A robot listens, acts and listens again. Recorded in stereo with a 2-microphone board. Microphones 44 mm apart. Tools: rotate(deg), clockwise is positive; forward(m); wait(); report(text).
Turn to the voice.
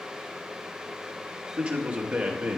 rotate(25)
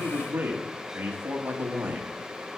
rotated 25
rotate(130)
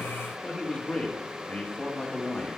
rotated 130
rotate(-25)
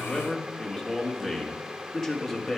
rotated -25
report("Found it: a man speaking, straight ahead.")